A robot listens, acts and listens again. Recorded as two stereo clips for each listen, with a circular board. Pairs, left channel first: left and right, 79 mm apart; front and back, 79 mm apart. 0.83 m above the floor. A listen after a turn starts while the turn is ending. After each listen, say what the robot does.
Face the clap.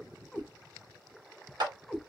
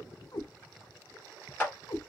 Turn 70° right.
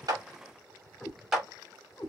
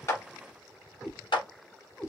Facing the clap, 1 to 2 m away.